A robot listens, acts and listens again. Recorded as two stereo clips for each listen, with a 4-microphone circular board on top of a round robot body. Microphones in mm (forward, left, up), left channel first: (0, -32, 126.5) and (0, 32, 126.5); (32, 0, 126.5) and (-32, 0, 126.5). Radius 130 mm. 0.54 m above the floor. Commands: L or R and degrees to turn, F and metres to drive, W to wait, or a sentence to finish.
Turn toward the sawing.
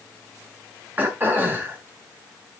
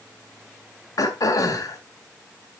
W
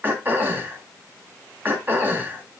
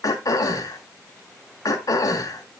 W
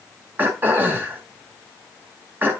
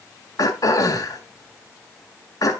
I can't make out sawing to turn to.